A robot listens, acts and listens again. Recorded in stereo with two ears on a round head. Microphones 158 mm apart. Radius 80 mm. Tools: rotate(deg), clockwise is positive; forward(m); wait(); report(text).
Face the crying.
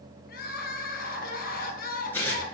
rotate(-55)
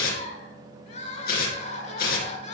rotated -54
rotate(-50)
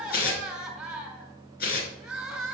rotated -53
report("Found it: crying, straight ahead, 2 to 4 m away.")